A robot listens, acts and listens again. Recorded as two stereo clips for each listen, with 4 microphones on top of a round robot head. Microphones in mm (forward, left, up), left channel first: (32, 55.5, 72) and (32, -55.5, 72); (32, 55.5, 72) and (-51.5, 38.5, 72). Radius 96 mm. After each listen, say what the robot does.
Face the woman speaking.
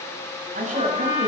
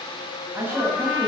Turn 95° right.
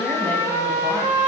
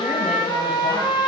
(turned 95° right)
Keep listening.
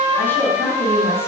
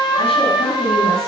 Keep listening.
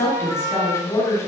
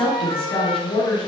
Turn 25° left.
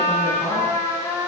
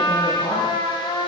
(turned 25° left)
Keep listening.
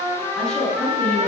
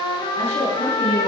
Found it: a woman speaking, straight ahead.